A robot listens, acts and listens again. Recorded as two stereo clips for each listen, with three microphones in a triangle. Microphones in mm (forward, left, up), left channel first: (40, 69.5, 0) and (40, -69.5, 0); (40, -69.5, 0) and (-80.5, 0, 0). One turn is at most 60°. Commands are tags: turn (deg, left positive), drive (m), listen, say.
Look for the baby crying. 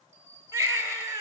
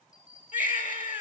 <turn deg="-15"/>
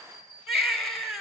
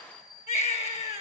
<say>Found it: a baby crying, straight ahead, 2 to 4 m away.</say>